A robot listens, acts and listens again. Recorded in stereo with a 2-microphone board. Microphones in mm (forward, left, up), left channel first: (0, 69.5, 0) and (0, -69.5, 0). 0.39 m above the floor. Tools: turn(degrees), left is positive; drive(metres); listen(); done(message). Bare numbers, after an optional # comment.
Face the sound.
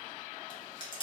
# The chewing: about 35° left or 145° left.
turn(35)
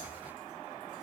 listen()
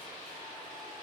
listen()
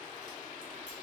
done("I heard chewing, but can't make it out now. It was about straight ahead or 110° left.")